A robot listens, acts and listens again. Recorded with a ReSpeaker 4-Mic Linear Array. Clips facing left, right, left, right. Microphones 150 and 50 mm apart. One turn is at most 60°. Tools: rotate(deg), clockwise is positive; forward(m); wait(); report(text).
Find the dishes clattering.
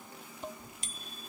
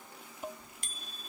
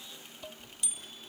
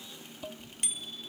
rotate(30)
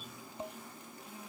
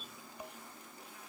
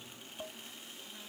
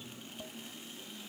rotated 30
rotate(-25)
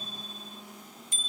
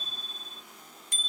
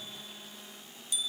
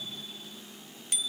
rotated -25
wait()
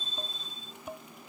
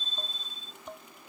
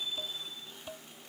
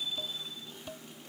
report("Facing the dishes clattering.")